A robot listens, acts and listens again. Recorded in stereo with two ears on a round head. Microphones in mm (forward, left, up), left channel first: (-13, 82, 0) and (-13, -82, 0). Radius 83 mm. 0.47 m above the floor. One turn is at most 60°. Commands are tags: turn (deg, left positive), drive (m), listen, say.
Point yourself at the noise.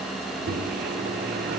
<turn deg="-55"/>
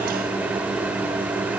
<turn deg="-10"/>
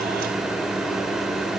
<say>Facing the microwave.</say>